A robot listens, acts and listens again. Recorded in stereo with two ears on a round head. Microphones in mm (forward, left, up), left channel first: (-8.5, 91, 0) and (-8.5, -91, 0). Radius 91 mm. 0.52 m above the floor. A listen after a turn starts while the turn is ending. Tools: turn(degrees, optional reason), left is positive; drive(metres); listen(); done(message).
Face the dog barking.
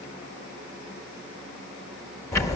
listen()
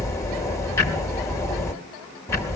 listen()
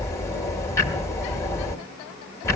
done("I can't make out a dog barking, only ticking.")